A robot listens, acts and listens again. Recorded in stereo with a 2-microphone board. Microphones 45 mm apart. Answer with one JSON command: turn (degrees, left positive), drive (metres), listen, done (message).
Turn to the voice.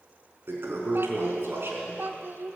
{"turn": -60}
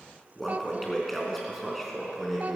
{"listen": true}
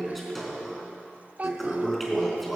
{"turn": -45}
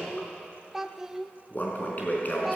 {"done": "Found it: a child speaking, straight ahead."}